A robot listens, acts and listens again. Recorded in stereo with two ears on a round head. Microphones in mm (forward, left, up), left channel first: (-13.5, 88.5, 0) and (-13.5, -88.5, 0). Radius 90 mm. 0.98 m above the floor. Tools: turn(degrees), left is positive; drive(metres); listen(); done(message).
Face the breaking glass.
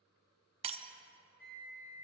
turn(degrees=-30)
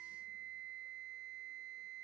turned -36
listen()
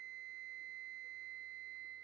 done("I heard breaking glass, but can't make it out now. It was about 10° left or 115° right.")